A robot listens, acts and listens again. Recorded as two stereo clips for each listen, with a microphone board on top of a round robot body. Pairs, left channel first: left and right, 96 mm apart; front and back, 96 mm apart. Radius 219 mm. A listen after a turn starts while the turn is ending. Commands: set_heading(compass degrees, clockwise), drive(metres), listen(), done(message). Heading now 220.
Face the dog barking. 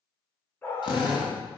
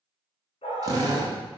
set_heading(200)
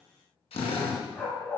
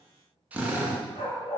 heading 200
set_heading(180)
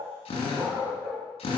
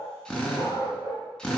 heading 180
done("Found it: a dog barking, straight ahead.")